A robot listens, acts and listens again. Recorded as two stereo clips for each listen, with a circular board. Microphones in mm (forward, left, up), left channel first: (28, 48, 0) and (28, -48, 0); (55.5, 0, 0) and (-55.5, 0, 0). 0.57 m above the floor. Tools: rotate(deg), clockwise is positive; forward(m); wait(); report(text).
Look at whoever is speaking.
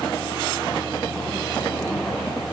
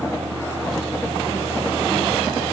wait()
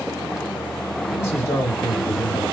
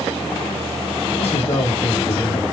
rotate(-30)
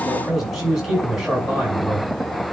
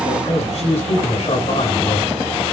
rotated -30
report("Facing the man speaking, over 4 m away.")